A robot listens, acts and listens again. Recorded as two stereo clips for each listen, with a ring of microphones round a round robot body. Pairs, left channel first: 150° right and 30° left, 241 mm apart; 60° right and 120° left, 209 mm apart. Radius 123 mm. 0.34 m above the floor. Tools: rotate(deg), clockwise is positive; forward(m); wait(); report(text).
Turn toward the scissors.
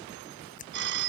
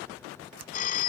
rotate(-150)
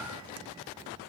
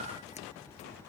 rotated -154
wait()
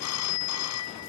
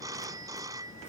wait()
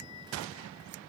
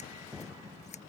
report("Facing the scissors.")